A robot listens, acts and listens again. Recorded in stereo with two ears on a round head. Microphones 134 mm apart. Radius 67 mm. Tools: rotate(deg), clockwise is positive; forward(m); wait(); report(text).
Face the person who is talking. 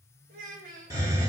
rotate(55)
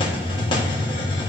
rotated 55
wait()
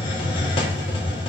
wait()
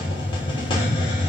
report("I heard a child speaking, but can't make it out now. It was about straight ahead or 70° right.")